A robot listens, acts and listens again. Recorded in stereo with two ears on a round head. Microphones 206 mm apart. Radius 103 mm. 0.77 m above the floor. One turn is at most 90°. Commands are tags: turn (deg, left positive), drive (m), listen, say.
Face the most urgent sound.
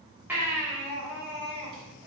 <turn deg="-30"/>
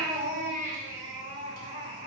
<turn deg="-90"/>
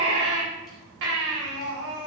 <turn deg="-60"/>
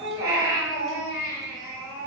<turn deg="-15"/>
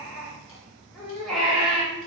<say>Facing the baby crying, 2 to 4 m away.</say>